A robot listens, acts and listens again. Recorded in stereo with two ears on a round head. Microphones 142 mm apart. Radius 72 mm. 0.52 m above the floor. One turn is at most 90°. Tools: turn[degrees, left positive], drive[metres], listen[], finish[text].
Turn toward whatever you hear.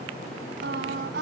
Action: turn[-90]
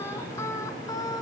Thought: So it is at 25° left.
Action: turn[25]
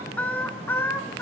Thought: The singing is now 15° left.
Action: turn[15]
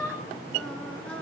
Thought: The singing is now 10° left.
Action: turn[10]
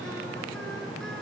Action: listen[]
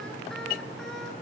Action: listen[]
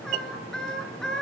Action: finish[Found it: singing, straight ahead.]